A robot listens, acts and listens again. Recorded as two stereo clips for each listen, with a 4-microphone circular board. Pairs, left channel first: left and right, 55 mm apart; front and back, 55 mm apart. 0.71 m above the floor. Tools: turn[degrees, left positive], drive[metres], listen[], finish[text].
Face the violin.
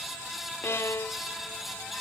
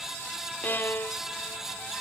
Thought: The violin: 55° left.
Action: turn[55]
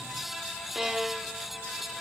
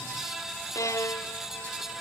Action: finish[Found it: a violin, straight ahead.]